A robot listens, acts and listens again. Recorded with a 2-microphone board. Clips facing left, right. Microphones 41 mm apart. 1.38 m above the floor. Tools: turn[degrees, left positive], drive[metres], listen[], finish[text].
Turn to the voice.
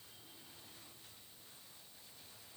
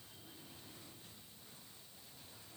Action: listen[]
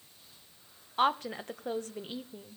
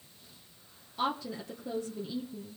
Thought: The woman speaking: about 50° left or 130° left.
Action: turn[50]
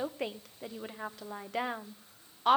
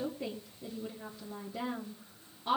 Thought: So it is at 75° left.
Action: turn[75]
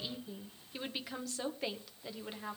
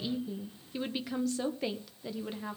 Action: finish[Facing the woman speaking, 1 to 2 m away.]